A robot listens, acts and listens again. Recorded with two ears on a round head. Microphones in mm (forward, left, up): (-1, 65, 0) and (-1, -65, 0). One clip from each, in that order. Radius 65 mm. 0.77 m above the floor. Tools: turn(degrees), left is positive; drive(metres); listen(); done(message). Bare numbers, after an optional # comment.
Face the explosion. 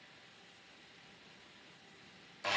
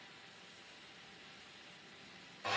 listen()
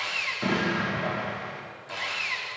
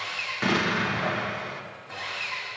# The explosion: about 45° right or 135° right.
turn(-45)
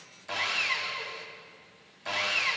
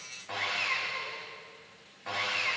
listen()
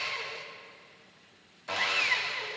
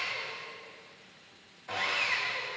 done("I heard an explosion, but can't make it out now. It was about straight ahead or 90° right.")